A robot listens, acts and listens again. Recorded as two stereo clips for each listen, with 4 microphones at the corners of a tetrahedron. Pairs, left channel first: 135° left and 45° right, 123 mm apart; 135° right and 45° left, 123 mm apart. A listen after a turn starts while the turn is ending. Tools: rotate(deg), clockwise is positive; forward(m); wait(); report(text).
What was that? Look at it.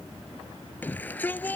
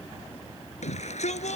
rotate(150)
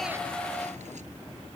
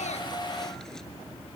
rotate(50)
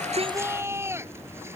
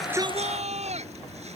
rotate(-25)
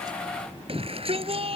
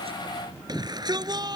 rotate(10)
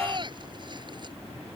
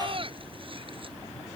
report("Facing the shout.")